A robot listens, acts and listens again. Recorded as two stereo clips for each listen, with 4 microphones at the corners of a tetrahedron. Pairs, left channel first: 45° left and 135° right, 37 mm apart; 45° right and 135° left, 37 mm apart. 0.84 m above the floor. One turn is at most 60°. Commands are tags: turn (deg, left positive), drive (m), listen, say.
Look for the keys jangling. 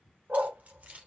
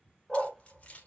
<turn deg="-60"/>
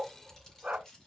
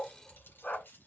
<turn deg="-25"/>
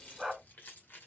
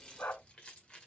<turn deg="25"/>
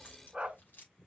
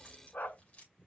<turn deg="15"/>
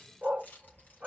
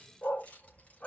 <turn deg="10"/>
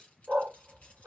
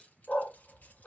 <listen/>
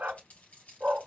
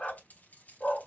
<say>Facing the keys jangling.</say>